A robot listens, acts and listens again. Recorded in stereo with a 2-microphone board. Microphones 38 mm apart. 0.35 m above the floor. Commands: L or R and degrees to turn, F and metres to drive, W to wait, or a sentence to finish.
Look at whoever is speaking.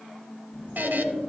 L20
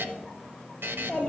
L140
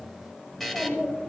L30
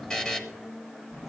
L20
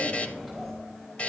Facing the child speaking.